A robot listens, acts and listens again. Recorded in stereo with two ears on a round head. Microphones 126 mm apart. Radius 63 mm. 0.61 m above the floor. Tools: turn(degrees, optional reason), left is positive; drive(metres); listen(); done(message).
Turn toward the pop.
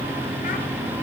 listen()
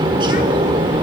listen()
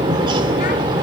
done("I can't make out a pop, only a bird.")